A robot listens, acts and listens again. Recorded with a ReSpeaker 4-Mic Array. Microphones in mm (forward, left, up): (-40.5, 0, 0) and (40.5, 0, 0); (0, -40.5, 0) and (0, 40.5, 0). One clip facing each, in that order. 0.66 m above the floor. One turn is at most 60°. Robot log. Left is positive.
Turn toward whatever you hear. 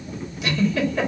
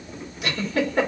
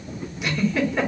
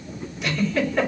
end: Facing the giggle, 1 to 2 m away.